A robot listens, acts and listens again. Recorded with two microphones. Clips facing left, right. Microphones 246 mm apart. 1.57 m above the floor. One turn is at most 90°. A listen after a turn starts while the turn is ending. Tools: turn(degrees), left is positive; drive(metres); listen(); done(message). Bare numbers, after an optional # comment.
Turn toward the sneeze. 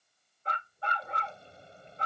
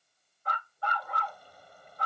listen()
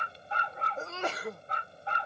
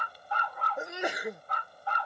turn(-30)
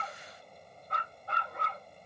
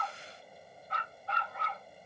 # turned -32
listen()
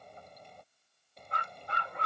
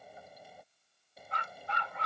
done("I heard a sneeze, but can't make it out now. It was about 20° left or 135° right.")